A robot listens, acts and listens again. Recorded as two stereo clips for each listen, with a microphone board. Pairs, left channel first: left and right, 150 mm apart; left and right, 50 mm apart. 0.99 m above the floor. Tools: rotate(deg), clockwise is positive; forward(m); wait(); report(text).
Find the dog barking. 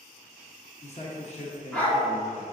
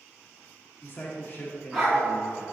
rotate(-30)
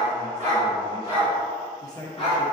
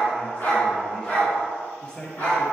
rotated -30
rotate(-130)
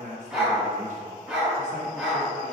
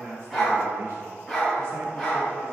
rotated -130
rotate(10)
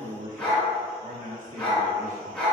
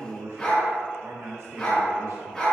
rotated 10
report("Facing the dog barking, over 4 m away.")